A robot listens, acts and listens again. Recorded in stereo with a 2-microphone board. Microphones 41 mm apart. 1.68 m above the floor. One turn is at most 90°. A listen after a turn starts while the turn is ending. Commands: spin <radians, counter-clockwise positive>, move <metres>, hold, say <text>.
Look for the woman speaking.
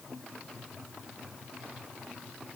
hold
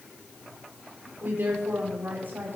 spin -0.96
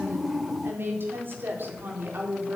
spin -0.87
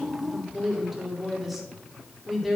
say Facing the woman speaking.